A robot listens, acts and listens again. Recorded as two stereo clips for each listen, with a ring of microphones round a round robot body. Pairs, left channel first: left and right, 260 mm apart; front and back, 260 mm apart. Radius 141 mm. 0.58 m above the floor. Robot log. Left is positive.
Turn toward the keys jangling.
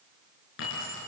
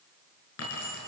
note: The keys jangling: 40° left.
cmd yaw +40
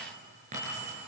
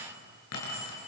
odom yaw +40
note: The keys jangling is now 25° right.
cmd yaw -25
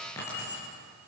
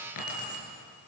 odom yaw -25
note: The keys jangling is now 10° left.
cmd yaw +10
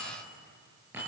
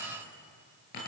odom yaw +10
end: Found it: keys jangling, straight ahead, over 4 m away.